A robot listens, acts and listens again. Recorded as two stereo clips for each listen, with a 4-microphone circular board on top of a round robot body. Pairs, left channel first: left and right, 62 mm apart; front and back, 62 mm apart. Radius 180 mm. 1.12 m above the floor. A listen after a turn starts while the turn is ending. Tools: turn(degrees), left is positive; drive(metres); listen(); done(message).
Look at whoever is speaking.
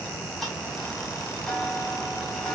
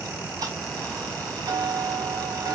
listen()
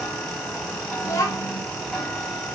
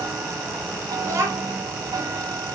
turn(degrees=140)
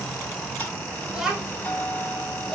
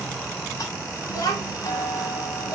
turn(degrees=-10)
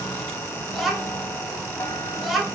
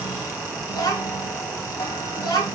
done("Facing the child speaking.")